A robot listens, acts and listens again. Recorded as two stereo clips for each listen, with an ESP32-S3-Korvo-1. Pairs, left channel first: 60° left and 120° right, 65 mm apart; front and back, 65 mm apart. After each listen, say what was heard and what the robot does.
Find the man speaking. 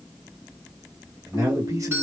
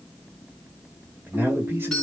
The man speaking: 135° right. Turn 135° right.
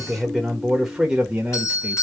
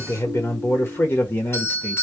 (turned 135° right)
The man speaking is now 50° right. Turn 50° right.
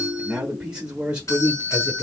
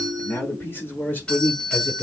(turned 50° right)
The man speaking is now 60° right. Turn 60° right.
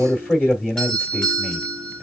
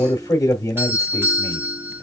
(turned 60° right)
Facing the man speaking, 1 to 2 m away.